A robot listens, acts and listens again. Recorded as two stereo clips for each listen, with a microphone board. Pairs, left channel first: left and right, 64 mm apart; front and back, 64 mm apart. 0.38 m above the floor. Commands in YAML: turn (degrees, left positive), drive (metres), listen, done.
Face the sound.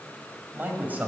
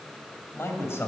turn: -35
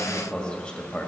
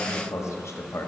turn: 20
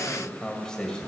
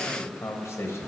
turn: 15
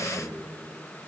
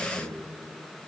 turn: 10
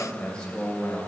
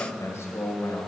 turn: 20
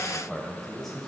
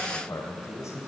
done: "Facing the man speaking, 1 to 2 m away."